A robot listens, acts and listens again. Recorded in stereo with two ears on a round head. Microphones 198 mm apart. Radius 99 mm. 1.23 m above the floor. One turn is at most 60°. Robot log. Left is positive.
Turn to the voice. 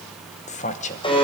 note: The man speaking: about 35° left or 145° left.
cmd yaw +35
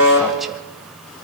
cmd idle
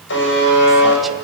cmd idle
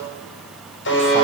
end: I heard a man speaking, but can't make it out now. It was about straight ahead or 110° left.